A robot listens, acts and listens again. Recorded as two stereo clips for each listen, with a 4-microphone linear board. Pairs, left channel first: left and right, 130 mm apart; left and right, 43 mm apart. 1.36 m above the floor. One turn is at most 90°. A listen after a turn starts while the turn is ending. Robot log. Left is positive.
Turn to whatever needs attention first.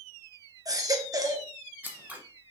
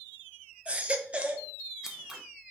note: The baby crying: about 30° right or 150° right.
cmd yaw -30
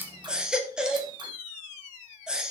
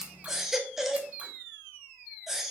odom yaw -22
end: Facing the baby crying, under 1 m away.